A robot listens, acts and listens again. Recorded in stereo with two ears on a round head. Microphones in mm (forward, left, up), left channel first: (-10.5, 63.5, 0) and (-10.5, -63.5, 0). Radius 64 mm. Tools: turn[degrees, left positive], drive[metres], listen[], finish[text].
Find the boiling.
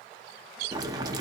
Thought: The boiling: about 25° right or 155° right.
Action: turn[-25]
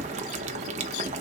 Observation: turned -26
Thought: So it is at 125° right.
Action: turn[-125]
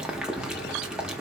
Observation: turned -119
Action: finish[Found it: boiling, straight ahead, under 1 m away.]